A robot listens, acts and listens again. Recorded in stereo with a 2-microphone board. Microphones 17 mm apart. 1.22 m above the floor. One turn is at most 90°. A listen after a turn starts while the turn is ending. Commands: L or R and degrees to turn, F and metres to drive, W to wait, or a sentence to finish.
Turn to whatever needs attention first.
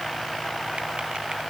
W
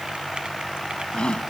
L90
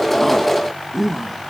R10
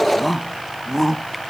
Found it: a shout, straight ahead.